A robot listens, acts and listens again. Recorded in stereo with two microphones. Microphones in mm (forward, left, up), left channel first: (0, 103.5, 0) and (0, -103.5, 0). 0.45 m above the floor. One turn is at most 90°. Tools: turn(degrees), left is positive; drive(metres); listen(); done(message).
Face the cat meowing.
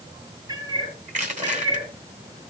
turn(degrees=-20)
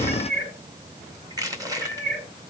turn(degrees=-90)
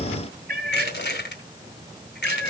turn(degrees=-50)
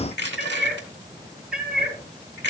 done("Facing the cat meowing.")